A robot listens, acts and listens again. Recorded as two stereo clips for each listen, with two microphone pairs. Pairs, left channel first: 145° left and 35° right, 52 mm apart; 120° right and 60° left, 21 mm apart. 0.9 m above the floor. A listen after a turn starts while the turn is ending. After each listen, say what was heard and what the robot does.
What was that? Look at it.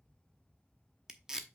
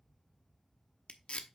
The tape being pulled: 115° right. Turn 115° right.
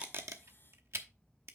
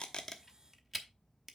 The tape being pulled is now 10° right. Turn 10° right.
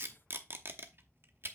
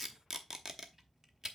Found it: tape being pulled, straight ahead, under 1 m away.